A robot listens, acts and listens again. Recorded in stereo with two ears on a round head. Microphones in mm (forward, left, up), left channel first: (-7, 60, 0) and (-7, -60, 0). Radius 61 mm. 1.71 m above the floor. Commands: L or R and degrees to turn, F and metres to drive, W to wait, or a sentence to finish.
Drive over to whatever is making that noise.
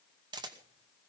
R35
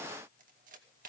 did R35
R110
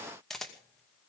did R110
F1.0
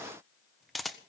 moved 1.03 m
F1.0
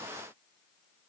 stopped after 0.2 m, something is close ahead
W
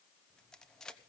Arrived at the camera shutter, straight ahead.